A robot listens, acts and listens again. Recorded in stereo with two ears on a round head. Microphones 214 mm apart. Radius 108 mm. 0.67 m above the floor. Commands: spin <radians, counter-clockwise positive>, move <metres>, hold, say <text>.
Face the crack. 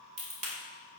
spin -0.52
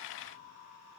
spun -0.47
hold
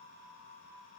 say I heard a crack, but can't make it out now. It was about straight ahead or 125° right.